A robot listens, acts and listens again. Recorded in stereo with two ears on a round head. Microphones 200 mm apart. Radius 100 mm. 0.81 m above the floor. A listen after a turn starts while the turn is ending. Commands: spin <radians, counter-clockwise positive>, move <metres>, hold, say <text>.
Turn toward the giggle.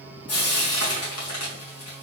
hold
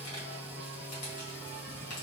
hold
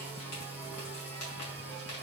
say I can't make out a giggle, only frying.